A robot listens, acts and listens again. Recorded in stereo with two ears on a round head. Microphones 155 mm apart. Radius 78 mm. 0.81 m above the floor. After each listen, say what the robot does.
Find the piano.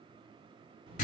Keep listening.
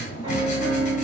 Turn 30° right.
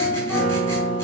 Facing the piano.